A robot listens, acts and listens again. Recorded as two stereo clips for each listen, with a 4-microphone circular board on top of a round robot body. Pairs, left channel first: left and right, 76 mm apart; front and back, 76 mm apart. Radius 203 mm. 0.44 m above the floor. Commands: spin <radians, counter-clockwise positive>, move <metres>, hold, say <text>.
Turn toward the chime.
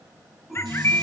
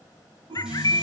spin 3.14
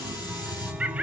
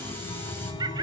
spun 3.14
spin -0.26
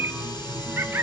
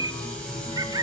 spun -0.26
say Facing the chime.